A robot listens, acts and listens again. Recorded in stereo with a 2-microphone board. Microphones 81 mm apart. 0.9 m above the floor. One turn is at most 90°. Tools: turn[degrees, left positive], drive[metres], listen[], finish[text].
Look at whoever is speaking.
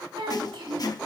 Action: turn[-90]
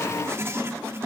Action: listen[]
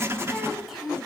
Action: finish[Found it: a child speaking, straight ahead, 2 to 4 m away.]